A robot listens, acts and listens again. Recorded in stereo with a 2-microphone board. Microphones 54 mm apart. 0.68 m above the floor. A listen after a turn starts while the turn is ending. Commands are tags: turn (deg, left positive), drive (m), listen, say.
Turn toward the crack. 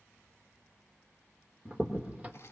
<turn deg="-25"/>
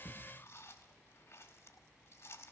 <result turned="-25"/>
<listen/>
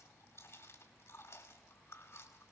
<say>I heard a crack, but can't make it out now. It was about straight ahead or 130° right.</say>